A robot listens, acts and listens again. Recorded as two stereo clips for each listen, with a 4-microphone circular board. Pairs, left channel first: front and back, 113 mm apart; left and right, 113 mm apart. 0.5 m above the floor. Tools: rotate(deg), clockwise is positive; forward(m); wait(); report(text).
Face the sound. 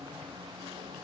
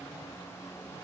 wait()
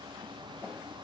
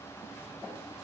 wait()
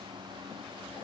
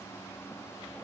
report("I can't make out anything.")